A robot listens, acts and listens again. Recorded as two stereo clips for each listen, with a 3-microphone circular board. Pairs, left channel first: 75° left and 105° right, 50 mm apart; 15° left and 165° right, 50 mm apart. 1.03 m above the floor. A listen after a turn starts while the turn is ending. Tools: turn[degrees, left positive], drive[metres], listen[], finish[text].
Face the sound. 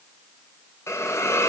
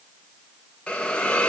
Thought: The hiss: 85° left.
Action: turn[85]
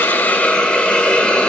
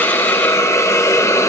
Thought: The hiss is now 10° left.
Action: turn[10]
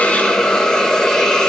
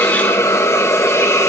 Action: finish[Found it: a hiss, straight ahead, under 1 m away.]